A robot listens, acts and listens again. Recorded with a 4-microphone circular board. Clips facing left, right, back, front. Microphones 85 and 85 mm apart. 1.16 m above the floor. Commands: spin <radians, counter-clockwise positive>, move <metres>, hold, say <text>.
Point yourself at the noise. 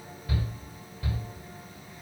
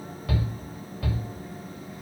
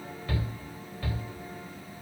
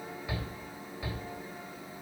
spin -1.40
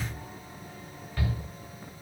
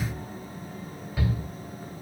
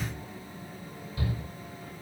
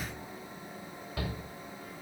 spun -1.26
say Found it: a shout, straight ahead.